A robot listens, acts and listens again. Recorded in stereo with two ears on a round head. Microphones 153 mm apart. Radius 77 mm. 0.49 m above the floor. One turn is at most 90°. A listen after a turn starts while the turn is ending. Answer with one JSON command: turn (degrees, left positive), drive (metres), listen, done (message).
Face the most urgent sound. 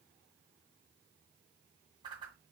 {"listen": true}
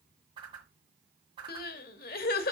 {"turn": 65}
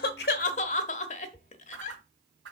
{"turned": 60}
{"turn": 45}
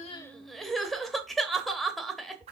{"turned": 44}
{"done": "Found it: crying, straight ahead."}